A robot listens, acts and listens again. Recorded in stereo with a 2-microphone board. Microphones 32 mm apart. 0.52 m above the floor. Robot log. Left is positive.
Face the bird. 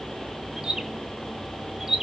cmd yaw -30
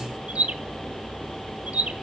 note: So it is at 135° right.
cmd yaw -135
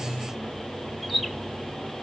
end: Facing the bird, 1 to 2 m away.